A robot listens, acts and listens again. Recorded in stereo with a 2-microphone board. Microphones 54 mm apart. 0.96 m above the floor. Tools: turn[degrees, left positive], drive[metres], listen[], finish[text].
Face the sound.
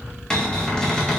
Action: turn[30]
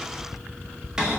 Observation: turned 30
Thought: So it is at 15° right.
Action: turn[-15]
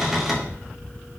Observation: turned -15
Action: finish[Facing the cupboard door.]